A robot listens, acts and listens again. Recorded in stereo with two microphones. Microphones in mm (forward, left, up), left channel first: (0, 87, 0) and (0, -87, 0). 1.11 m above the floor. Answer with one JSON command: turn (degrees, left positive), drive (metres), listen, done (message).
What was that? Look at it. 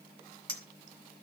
{"turn": 30}
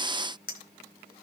{"turn": 120}
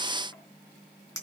{"turn": 20}
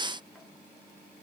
{"listen": true}
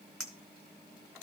{"done": "Facing the clink, 2 to 4 m away."}